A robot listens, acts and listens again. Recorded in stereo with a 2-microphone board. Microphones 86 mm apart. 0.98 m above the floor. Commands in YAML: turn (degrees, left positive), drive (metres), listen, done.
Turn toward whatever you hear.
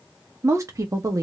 turn: -40
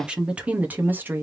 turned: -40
turn: -25
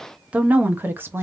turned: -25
turn: -30
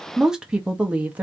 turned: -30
turn: -20
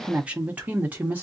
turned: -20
turn: -20
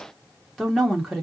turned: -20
done: "Facing the woman speaking, 1 to 2 m away."